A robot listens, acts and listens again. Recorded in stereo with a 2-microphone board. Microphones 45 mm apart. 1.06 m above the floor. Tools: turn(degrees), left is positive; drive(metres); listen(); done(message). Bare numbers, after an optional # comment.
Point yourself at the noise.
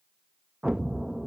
turn(-30)
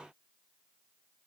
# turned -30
listen()
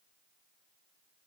done("I heard an explosion, but can't make it out now. It was about 15° left or 135° right.")